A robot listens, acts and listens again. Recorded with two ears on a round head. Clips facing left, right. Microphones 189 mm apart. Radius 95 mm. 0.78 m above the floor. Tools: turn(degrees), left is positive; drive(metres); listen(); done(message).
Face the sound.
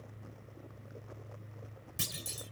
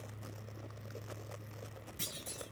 turn(degrees=60)
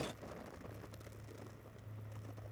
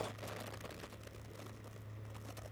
listen()
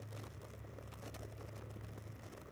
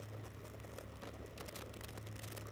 done("I heard a clunk, but can't make it out now. It was about straight ahead or 60° left.")